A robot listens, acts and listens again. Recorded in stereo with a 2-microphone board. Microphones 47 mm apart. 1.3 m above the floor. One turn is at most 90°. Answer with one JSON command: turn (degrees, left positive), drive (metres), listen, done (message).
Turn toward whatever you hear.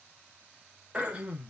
{"turn": -25}
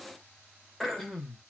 {"done": "Found it: throat clearing, straight ahead, under 1 m away."}